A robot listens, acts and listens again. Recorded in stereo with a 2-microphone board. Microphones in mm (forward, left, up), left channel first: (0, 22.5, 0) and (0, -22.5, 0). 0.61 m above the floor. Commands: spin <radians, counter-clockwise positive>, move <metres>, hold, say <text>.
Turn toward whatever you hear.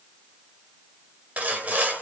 spin -0.61
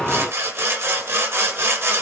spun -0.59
spin -1.92
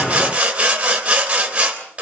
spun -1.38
spin -0.52
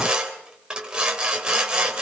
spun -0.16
spin -0.35
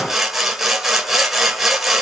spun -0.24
say Found it: sawing, straight ahead, 2 to 4 m away.